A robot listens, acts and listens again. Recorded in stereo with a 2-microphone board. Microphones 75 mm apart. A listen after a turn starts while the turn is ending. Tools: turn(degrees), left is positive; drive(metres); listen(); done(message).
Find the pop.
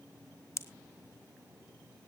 turn(degrees=40)
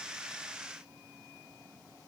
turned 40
listen()
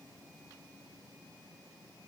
done("I heard a pop, but can't make it out now. It was about straight ahead or 100° left.")